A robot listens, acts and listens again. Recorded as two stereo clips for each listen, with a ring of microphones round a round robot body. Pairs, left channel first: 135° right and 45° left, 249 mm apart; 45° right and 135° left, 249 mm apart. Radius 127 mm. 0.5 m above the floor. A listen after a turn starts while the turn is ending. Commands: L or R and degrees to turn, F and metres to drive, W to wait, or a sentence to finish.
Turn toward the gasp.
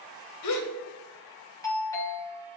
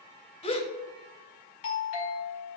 R115
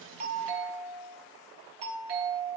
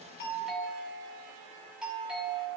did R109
Facing where the gasp came from. I can't hear it now.